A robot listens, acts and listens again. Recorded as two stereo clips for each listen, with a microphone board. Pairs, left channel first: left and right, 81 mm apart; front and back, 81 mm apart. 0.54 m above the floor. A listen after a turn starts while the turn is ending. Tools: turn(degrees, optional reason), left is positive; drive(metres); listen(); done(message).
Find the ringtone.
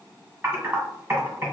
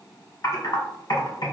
listen()
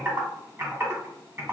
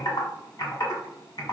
listen()
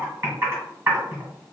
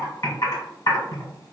done("I can't make out a ringtone, only typing on a keyboard.")